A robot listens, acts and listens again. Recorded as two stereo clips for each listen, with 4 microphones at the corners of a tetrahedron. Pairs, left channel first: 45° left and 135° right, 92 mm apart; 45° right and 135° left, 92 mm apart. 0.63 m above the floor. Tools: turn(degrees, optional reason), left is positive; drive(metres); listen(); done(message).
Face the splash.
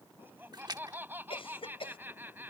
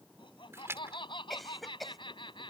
turn(degrees=-170, reason="The splash: 170° right.")
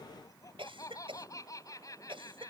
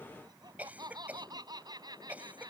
done("Facing where the splash came from. I can't hear it now.")